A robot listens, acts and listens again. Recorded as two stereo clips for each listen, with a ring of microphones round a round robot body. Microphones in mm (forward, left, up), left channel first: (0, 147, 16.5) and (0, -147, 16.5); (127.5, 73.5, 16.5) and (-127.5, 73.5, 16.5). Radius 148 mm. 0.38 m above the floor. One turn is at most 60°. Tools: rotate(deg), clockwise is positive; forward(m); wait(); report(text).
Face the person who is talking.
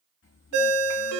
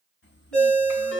rotate(-45)
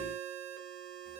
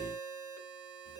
wait()
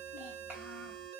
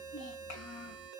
report("Found it: a child speaking, straight ahead, 1 to 2 m away.")